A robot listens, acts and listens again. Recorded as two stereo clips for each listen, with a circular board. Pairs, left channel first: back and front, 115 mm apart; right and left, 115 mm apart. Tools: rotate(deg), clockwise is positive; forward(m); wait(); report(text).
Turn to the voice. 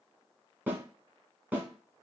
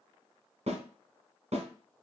wait()
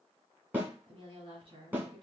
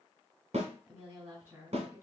rotate(-25)
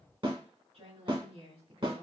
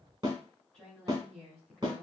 rotate(10)
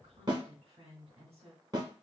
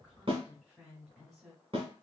report("Facing the woman speaking.")